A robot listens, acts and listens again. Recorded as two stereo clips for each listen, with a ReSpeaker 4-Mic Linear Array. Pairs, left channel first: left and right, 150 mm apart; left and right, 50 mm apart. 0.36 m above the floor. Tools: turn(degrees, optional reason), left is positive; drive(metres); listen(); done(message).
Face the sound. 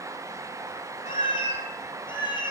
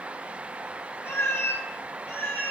turn(degrees=30, reason="The cat meowing: about 30° left or 150° left.")
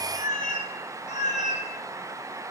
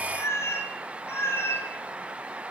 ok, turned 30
turn(degrees=130, reason="So it is at 130° left.")
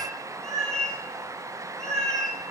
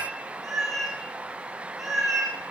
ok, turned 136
done("Found it: a cat meowing, straight ahead.")